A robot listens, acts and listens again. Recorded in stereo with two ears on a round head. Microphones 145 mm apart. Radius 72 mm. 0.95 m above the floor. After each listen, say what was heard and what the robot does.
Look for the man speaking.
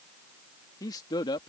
The man speaking: about 30° left or 150° left. Turn 30° left.
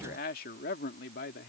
So it is at 115° left. Turn 115° left.
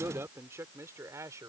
The man speaking is now 20° right. Turn 20° right.
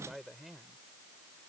Found it: a man speaking, straight ahead.